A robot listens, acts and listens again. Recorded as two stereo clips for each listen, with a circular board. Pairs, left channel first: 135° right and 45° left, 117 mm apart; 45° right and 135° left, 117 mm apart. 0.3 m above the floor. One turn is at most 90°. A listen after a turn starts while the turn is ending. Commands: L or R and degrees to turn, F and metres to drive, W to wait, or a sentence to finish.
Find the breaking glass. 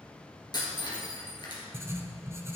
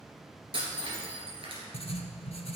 L90
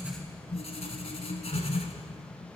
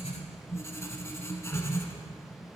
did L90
L85
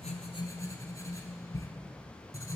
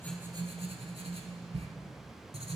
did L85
Facing where the breaking glass came from. I can't hear it now.